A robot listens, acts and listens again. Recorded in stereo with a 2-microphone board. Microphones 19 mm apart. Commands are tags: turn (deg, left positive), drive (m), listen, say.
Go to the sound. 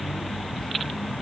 <listen/>
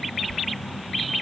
<listen/>
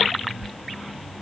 <turn deg="25"/>
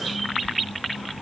<listen/>
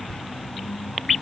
<listen/>
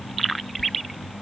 <say>I heard whispering, but can't make it out now. It was about straight ahead or 130° left. I did not reach it.</say>